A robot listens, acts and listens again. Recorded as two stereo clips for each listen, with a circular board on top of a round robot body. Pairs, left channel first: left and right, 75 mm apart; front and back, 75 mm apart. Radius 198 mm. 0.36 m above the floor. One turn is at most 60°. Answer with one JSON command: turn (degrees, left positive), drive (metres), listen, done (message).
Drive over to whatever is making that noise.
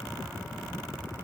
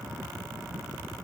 {"listen": true}
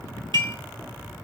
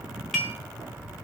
{"turn": -60}
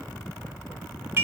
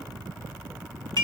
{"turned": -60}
{"turn": -30}
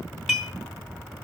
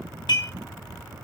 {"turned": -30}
{"drive": 1.0}
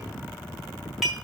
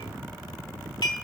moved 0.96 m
{"drive": 1.0}
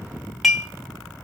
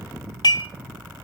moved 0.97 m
{"drive": 1.0}
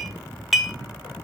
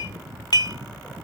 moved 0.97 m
{"drive": 1.0}
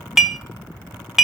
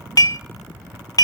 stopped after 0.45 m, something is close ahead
{"done": "I am next to the dishes clattering."}